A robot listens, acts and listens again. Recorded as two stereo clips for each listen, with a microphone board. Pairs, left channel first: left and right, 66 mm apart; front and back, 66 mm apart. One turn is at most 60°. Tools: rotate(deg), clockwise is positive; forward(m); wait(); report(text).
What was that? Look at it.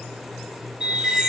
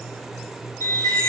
rotate(15)
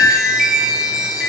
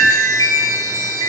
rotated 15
report("Found it: a chime, straight ahead.")